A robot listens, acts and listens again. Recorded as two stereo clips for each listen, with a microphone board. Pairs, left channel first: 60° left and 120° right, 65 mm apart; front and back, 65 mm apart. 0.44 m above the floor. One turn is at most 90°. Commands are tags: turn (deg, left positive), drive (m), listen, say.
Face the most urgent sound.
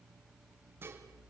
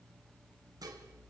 <listen/>
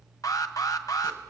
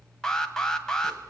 <turn deg="80"/>
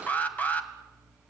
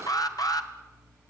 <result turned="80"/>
<say>Found it: an alarm, straight ahead.</say>